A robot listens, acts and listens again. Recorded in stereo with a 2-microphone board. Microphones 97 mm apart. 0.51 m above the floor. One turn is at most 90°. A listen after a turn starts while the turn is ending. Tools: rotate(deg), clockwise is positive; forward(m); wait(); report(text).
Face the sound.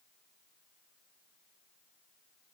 wait()
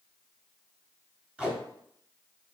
rotate(30)
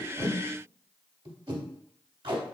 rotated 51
rotate(90)
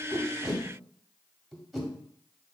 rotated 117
report("Facing the tape being pulled.")